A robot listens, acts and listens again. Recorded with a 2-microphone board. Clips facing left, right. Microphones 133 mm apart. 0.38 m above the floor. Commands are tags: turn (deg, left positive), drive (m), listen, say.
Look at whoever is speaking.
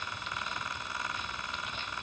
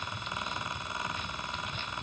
<listen/>
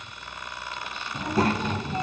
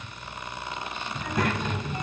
<turn deg="35"/>
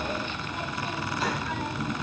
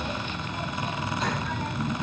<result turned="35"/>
<say>Facing the child speaking.</say>